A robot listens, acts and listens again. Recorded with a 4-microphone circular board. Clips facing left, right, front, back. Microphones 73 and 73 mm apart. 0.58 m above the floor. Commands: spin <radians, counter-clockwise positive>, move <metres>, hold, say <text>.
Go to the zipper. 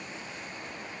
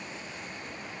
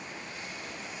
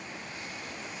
hold
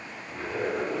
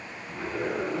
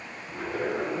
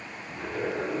move 1.0
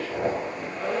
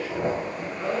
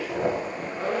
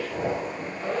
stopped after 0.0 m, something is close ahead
say Something is in my way. I am facing the zipper but have not reached it.